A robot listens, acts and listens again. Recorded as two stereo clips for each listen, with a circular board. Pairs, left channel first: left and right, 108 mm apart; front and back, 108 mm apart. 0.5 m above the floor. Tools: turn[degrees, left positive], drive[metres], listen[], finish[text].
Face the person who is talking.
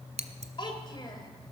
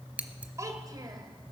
Thought: The child speaking: 130° left.
Action: turn[130]
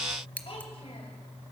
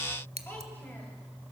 Thought: The child speaking is now 70° left.
Action: turn[70]
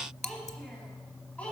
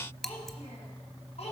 Thought: The child speaking is now 10° left.
Action: turn[10]
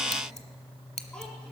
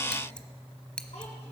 Action: listen[]
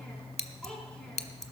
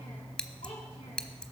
Thought: The child speaking is now 10° left.
Action: turn[10]
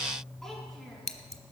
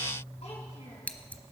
Action: listen[]
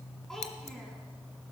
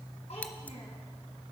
Action: finish[Found it: a child speaking, straight ahead, over 4 m away.]